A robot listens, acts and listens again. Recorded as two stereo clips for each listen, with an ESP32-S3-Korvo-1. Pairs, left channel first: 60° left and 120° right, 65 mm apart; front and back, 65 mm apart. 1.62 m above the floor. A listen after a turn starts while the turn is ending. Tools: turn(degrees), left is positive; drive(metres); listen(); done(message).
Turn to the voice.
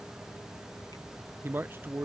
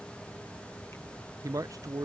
turn(degrees=-170)
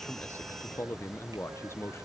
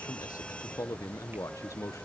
turn(degrees=20)
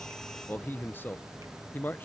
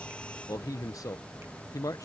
done("Facing the man speaking.")